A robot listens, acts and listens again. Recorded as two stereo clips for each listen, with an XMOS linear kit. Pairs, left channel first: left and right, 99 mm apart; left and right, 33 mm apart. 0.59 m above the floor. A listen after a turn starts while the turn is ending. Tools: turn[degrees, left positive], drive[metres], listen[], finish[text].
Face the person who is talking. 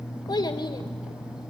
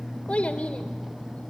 Thought: The child speaking: about 50° left or 130° left.
Action: turn[50]
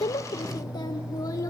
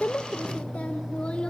Action: listen[]
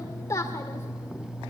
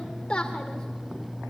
Thought: So it is at 30° left.
Action: turn[30]
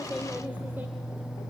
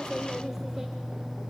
Action: listen[]
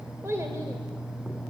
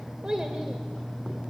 Thought: The child speaking is now 30° right.
Action: turn[-30]
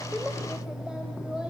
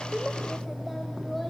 Action: listen[]
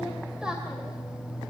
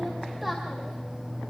Action: listen[]
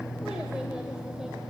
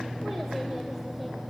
Action: finish[Facing where the child speaking came from. I can't hear it now.]